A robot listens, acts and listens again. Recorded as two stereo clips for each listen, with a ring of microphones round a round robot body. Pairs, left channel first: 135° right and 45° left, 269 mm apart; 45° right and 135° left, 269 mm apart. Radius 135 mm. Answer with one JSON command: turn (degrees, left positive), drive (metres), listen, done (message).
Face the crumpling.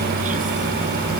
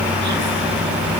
{"listen": true}
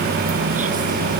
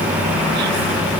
{"listen": true}
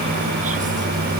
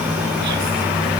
{"done": "I can't make out crumpling to turn to."}